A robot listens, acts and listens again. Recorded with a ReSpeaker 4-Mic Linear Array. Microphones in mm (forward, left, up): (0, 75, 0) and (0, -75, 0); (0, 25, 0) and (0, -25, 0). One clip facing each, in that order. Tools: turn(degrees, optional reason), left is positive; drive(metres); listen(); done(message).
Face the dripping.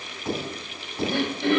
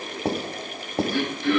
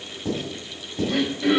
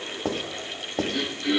listen()
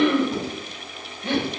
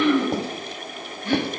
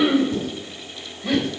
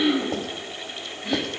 listen()
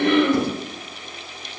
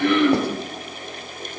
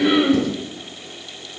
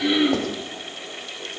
done("I can't make out dripping, only throat clearing and writing.")